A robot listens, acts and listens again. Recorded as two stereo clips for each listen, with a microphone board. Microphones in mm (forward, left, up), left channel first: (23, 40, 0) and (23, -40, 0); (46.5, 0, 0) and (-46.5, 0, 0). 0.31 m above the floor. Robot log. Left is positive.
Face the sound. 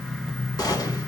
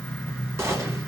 note: The gunshot: 125° left.
cmd yaw +125
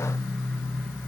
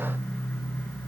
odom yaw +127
end: I heard a gunshot from this way, but can't make it out now.